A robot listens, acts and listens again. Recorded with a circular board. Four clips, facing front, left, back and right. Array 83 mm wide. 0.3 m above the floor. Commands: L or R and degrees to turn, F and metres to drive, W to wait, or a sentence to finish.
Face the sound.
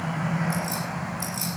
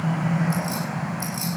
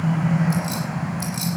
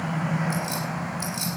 R160
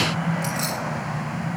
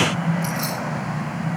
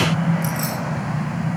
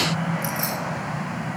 L15
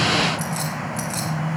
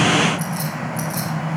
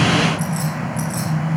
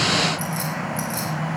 R10
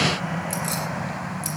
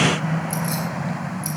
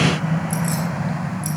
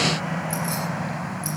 W
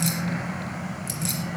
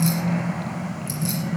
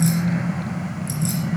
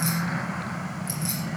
Facing the keys jangling, over 4 m away.